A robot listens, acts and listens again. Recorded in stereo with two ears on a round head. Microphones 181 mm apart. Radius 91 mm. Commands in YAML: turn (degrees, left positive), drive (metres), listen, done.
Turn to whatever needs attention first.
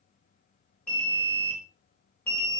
turn: 30
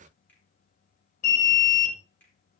turn: 140
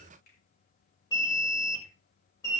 turn: 20
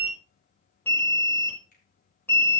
turn: 10
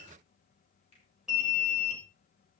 done: "Found it: an alarm, straight ahead."